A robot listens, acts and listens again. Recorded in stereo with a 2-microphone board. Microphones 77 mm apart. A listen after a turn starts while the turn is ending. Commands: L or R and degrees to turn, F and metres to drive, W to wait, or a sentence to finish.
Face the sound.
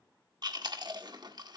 R60
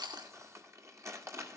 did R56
R45
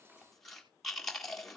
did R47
Facing the chewing, 1 to 2 m away.